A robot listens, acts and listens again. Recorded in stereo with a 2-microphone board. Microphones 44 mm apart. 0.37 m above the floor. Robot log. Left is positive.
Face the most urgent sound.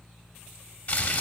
cmd idle
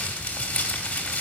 cmd idle
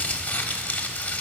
end: I can't make out anything urgent to turn to.